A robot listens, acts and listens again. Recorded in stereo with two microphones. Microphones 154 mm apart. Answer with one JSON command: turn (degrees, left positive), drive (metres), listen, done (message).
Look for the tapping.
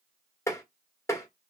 {"turn": 15}
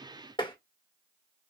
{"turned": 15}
{"turn": 150}
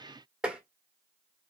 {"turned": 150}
{"done": "Found it: tapping, straight ahead, 1 to 2 m away."}